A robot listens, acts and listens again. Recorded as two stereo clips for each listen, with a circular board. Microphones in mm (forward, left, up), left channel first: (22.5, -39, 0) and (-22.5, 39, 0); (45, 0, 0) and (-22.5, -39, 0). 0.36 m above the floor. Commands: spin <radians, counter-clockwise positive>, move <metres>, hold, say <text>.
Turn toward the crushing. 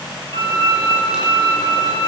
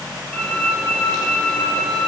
hold
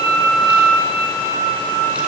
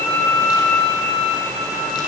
hold
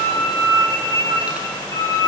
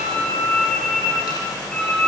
say I can't make out crushing, only a violin.